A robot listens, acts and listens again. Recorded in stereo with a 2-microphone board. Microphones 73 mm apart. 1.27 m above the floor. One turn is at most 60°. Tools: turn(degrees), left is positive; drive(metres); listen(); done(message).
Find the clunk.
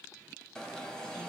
listen()
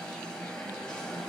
listen()
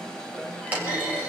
turn(degrees=-20)
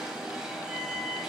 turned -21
listen()
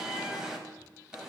done("I heard a clunk, but can't make it out now. It was about straight ahead or 140° right.")